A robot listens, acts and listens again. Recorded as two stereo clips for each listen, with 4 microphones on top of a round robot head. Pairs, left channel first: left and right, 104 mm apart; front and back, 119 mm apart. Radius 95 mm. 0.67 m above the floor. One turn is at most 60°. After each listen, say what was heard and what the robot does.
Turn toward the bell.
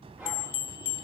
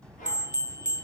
The bell: 100° left. Turn 60° left.
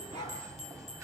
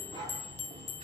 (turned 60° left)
The bell is now 35° left. Turn 35° left.
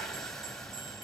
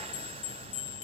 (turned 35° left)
Found it: a bell, straight ahead.